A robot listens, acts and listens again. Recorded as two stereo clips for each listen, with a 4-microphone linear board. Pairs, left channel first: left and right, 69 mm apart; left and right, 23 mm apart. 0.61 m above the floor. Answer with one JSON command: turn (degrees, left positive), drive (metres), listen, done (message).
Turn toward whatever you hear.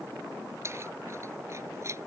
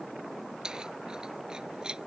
{"turn": -45}
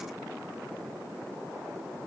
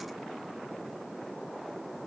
{"listen": true}
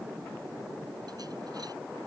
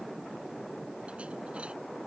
{"listen": true}
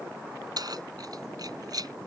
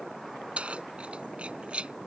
{"turn": -70}
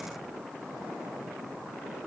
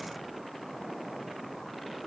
{"listen": true}
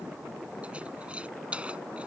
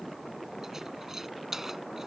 {"turn": -15}
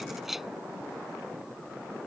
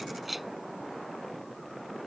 {"done": "Found it: keys jangling, straight ahead."}